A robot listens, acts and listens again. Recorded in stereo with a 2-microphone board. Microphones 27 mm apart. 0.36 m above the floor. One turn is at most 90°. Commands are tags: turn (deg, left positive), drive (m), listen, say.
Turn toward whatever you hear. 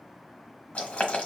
<turn deg="55"/>
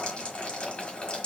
<turn deg="65"/>
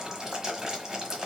<turn deg="-20"/>
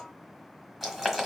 <say>Found it: boiling, straight ahead.</say>